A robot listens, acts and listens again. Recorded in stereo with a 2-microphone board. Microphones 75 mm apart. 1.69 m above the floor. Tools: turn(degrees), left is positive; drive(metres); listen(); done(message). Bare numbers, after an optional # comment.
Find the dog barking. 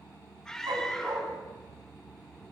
# The dog barking: about 65° right or 115° right.
turn(-65)
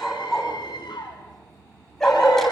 done("Facing the dog barking, over 4 m away.")